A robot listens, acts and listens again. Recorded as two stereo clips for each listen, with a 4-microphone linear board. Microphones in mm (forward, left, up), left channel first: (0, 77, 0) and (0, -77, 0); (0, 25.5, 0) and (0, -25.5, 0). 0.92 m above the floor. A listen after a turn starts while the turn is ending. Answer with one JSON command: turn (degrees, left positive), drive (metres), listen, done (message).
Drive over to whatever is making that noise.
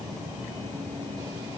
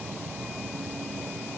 {"listen": true}
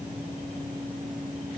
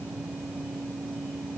{"listen": true}
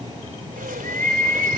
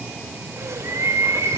{"turn": -60}
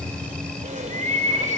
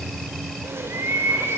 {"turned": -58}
{"turn": -60}
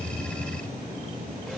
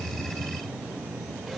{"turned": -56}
{"listen": true}
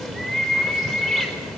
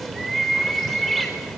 {"drive": 1.0}
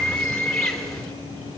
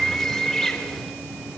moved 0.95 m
{"drive": 1.0}
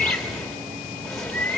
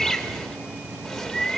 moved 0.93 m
{"drive": 1.0}
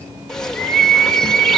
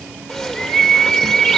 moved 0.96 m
{"drive": 1.0}
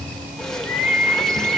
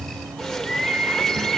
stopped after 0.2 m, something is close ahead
{"done": "Arrived at the bird, straight ahead."}